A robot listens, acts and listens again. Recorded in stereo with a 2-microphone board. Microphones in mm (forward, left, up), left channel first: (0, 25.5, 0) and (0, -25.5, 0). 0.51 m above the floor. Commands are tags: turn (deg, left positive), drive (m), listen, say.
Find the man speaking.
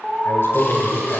<turn deg="50"/>
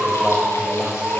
<turn deg="-15"/>
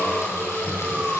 <turn deg="-10"/>
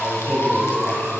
<turn deg="-10"/>
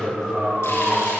<say>Facing the man speaking.</say>